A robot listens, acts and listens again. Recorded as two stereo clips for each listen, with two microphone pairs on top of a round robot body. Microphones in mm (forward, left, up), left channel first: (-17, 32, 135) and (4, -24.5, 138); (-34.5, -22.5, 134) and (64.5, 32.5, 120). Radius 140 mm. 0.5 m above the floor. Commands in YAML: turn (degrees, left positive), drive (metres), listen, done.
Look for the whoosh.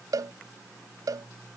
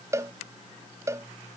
listen: true
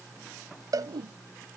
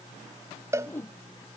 turn: -75
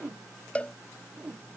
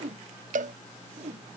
done: "Found it: a whoosh, straight ahead."